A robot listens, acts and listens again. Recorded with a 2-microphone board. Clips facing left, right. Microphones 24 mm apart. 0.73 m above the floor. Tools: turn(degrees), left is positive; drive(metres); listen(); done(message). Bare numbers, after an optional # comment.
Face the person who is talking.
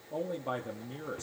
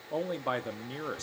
# The man speaking: about 50° right or 130° right.
turn(-50)
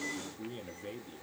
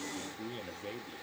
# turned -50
# So it is at 10° right.
turn(-10)
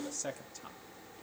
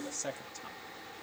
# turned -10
done("Found it: a man speaking, straight ahead, 1 to 2 m away.")